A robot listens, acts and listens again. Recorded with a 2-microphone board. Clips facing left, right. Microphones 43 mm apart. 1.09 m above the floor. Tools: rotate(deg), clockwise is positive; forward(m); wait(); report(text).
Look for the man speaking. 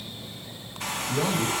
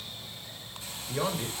rotate(45)
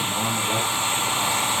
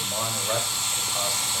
rotate(85)
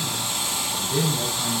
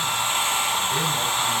rotate(30)
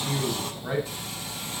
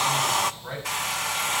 rotate(-15)
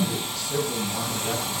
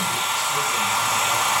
wait()
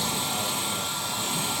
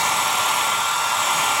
wait()
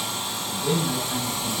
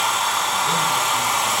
report("I heard a man speaking from this way, but can't make it out now.")